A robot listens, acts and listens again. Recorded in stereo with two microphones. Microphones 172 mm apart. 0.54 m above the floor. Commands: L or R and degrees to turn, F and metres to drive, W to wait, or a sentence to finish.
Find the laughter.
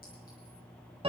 W
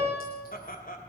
L55
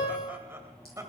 R20
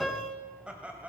R10
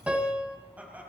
R10
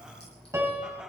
Found it: laughter, straight ahead.